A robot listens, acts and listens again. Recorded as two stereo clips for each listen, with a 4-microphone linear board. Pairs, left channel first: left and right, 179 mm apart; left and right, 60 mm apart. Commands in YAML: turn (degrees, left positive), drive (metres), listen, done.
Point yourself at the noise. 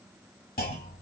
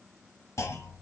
turn: 55
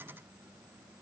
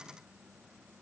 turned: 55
listen: true
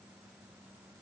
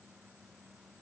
done: "I heard a clunk, but can't make it out now. It was about straight ahead or 70° left."